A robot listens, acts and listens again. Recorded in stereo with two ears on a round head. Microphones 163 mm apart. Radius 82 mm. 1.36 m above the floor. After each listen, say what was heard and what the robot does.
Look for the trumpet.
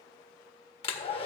Keep listening.
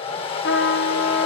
The trumpet: about 65° left or 115° left. Turn 65° left.
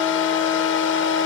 So it is at 15° left. Turn 15° left.
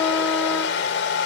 Keep listening.
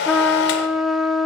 Found it: a trumpet, straight ahead, under 1 m away.